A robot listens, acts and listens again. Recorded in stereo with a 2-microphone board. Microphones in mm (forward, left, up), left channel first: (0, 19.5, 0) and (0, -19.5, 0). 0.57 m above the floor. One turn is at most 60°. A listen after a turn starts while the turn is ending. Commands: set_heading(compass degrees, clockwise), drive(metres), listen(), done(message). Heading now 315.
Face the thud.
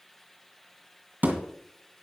set_heading(0)
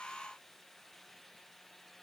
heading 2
listen()
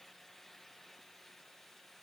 done("I heard a thud, but can't make it out now. It was about straight ahead or 85° right.")